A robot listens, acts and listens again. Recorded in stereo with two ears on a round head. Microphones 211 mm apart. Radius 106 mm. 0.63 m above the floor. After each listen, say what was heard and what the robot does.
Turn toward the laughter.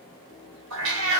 Keep listening.
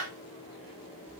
Keep listening.
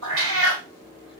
I can't make out laughter, only a cat meowing.